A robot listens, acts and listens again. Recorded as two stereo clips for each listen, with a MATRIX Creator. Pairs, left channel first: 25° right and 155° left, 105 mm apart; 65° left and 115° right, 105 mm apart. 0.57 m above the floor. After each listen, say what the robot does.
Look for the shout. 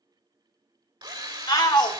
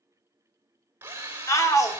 Turn 15° left.
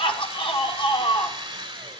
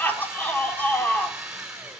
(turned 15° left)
Found it: a shout, straight ahead, 1 to 2 m away.